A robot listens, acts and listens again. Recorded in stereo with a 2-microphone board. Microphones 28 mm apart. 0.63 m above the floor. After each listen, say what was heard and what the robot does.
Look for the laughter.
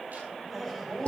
Turn 30° left.
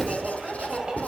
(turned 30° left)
So it is at 35° right. Turn 35° right.
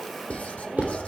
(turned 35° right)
Found it: laughter, straight ahead.